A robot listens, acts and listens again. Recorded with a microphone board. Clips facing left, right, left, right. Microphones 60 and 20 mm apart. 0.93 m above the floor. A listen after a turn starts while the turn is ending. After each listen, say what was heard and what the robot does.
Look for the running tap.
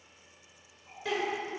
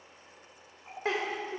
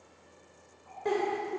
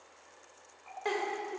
The running tap: about 60° right or 120° right. Turn 60° right.
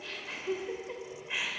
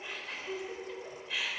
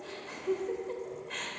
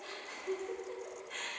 Keep listening.
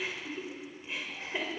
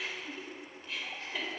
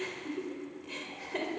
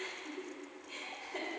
Keep listening.
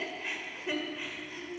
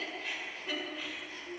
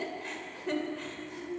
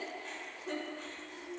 I heard a running tap, but can't make it out now. It was about straight ahead or 60° right.